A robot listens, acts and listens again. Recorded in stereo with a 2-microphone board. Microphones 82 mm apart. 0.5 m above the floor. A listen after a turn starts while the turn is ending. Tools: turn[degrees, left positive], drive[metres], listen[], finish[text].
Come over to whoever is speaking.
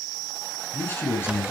Thought: The man speaking: about 30° left or 150° left.
Action: turn[30]
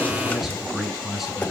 Action: drive[1.0]
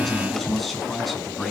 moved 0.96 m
Action: drive[1.0]
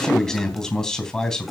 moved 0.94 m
Action: drive[1.0]
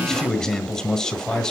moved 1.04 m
Action: drive[1.0]
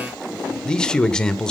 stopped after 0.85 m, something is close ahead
Thought: The man speaking is now 10° left.
Action: turn[10]
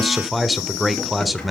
Action: finish[Arrived at the man speaking, straight ahead.]